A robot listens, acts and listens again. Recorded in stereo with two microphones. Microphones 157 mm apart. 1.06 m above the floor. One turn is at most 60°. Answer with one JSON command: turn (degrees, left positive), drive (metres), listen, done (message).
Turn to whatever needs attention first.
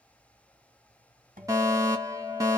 {"turn": -20}
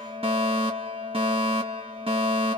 {"turn": -60}
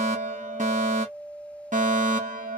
{"turn": -60}
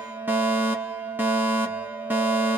{"turn": -15}
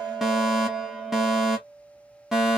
{"done": "Found it: a fire alarm, straight ahead, 1 to 2 m away."}